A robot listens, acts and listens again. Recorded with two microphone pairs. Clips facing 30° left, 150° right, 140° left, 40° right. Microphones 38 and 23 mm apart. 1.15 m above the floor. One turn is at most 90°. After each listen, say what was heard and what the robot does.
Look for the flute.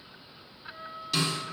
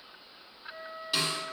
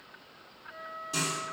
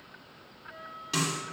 The flute: straight behind. Turn 90° left.
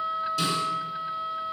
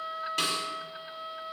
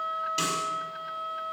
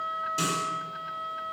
The flute is now 80° left. Turn 80° left.
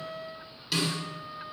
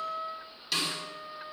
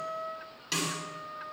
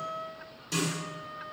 The flute is now 10° left. Turn 10° left.
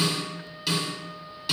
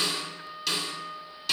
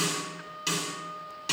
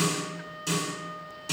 Found it: a flute, straight ahead, 1 to 2 m away.